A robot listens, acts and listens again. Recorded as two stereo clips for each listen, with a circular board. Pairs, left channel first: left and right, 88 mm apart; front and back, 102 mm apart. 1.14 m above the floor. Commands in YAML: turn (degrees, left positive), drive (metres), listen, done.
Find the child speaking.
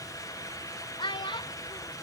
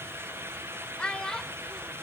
turn: 85
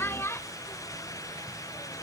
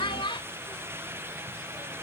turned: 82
turn: 35
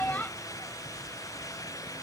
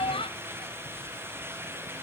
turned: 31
turn: 20
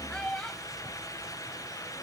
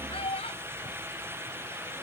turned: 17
turn: 10
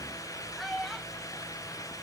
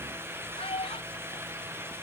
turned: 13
done: "Found it: a child speaking, straight ahead."